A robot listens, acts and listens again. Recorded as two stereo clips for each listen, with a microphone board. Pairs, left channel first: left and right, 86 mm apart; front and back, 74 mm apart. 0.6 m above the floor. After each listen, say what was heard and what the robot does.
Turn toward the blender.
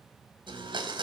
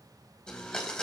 The blender: 80° right. Turn 80° right.
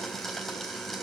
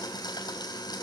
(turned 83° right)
Facing the blender.